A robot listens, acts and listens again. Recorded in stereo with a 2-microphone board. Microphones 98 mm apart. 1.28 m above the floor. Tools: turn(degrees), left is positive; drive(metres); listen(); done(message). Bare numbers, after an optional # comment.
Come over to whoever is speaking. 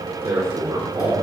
# The man speaking: about 30° right or 150° right.
turn(-30)
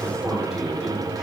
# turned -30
drive(1.0)
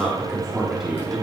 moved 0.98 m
drive(1.0)
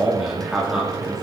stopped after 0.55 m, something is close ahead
done("Blocked. The man speaking is further on, straight ahead.")